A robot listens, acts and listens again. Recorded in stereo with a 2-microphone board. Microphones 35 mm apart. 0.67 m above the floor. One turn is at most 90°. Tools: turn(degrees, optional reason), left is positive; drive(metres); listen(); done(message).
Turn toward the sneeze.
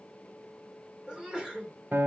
turn(degrees=-20, reason="The sneeze: about 20° right or 160° right.")
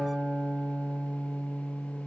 listen()
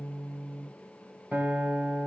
done("I heard a sneeze, but can't make it out now. It was about straight ahead or 140° right.")